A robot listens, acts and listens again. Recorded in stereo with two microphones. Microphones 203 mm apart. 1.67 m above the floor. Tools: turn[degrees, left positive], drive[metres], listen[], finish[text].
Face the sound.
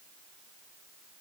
Action: listen[]
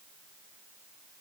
Action: listen[]
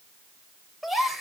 Action: turn[30]
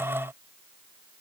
Action: listen[]
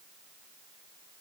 Action: finish[I heard a gasp, but can't make it out now. It was about 30° right or 150° left.]